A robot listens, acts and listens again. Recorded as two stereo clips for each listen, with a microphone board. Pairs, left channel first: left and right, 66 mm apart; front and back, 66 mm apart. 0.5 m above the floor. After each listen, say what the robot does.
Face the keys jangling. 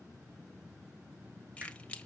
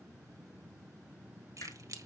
Turn 160° left.
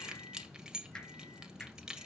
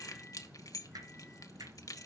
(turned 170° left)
Turn 10° right.
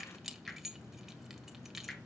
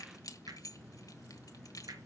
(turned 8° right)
Found it: keys jangling, straight ahead.